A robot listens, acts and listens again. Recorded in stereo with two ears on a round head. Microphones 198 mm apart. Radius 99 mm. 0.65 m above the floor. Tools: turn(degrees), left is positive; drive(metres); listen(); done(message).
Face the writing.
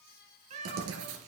turn(degrees=-70)
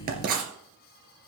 turn(degrees=-45)
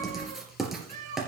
done("Facing the writing, 2 to 4 m away.")